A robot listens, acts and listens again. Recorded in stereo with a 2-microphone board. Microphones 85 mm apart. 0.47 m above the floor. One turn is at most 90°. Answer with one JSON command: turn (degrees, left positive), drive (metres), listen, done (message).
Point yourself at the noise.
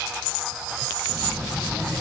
{"turn": -30}
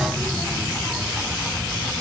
{"turn": 10}
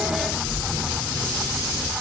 {"done": "Facing the child speaking."}